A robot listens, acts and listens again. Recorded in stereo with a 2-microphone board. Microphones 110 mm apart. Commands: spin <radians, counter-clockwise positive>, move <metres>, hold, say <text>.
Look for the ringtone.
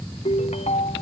spin 1.22
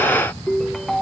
say Found it: a ringtone, straight ahead.